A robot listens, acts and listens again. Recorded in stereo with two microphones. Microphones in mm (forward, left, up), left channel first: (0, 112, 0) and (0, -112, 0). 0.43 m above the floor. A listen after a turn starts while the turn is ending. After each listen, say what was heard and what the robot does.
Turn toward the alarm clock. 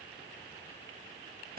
Keep listening.
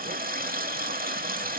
Keep listening.
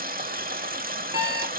Turn 30° right.
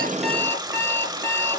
So it is at 10° left. Turn 10° left.
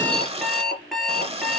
Found it: an alarm clock, straight ahead.